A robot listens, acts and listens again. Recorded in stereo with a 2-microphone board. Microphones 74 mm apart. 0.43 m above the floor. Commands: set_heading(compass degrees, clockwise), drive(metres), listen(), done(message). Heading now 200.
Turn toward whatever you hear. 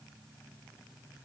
listen()
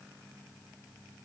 listen()
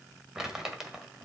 set_heading(230)
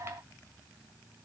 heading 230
listen()
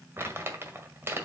set_heading(15)
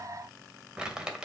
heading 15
set_heading(30)
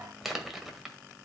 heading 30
done("Facing the crumpling.")